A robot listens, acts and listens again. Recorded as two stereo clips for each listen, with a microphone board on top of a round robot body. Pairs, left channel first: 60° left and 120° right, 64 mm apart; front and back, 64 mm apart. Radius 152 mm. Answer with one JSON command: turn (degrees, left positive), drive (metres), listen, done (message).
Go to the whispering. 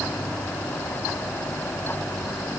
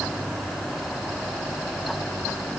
{"listen": true}
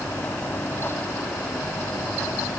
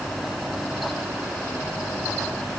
{"listen": true}
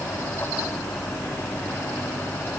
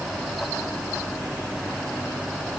{"done": "I can't make out whispering to turn to."}